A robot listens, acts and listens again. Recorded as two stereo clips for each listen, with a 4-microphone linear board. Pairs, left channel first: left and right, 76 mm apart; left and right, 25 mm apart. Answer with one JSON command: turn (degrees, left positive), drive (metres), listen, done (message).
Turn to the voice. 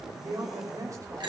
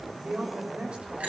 {"turn": -45}
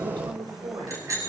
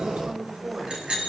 {"turn": -85}
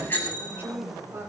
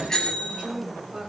{"turn": -35}
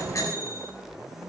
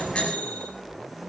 {"listen": true}
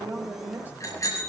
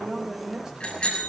{"turn": -25}
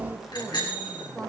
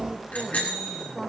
{"turn": 10}
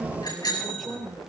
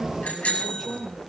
{"done": "Found it: a woman speaking, straight ahead."}